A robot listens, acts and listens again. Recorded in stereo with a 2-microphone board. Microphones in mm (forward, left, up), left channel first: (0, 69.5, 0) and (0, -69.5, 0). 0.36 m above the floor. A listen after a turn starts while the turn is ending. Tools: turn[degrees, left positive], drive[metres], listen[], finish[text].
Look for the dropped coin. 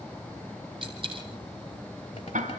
Thought: The dropped coin: about 40° right or 140° right.
Action: turn[-40]
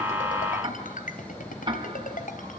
Action: listen[]
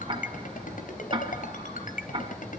Action: finish[I heard a dropped coin, but can't make it out now. It was about straight ahead or 100° right.]